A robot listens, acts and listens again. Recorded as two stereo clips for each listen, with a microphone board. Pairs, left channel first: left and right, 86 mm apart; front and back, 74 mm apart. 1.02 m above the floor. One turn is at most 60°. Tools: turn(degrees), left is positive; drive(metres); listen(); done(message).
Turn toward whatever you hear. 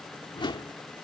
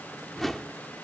turn(degrees=60)
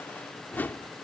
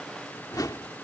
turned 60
turn(degrees=25)
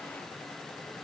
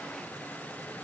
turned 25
listen()
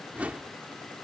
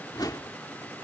turn(degrees=-15)
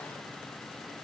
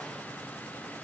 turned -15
listen()
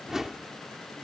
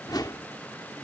done("Found it: a whoosh, straight ahead.")